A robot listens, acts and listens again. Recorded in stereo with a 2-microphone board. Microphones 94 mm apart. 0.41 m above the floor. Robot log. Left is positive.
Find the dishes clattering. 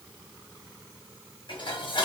note: The dishes clattering: about 60° left or 120° left.
cmd yaw +60
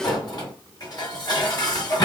note: So it is at 50° left.
cmd yaw +50
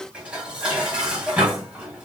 note: The dishes clattering is now 10° right.
cmd yaw -10
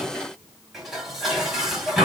end: Found it: dishes clattering, straight ahead.